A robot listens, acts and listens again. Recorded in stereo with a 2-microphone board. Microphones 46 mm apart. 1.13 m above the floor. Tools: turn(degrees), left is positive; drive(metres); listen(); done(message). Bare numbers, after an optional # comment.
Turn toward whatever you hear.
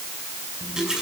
turn(-30)
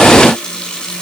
# So it is at 20° left.
turn(20)
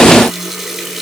done("Facing the running tap.")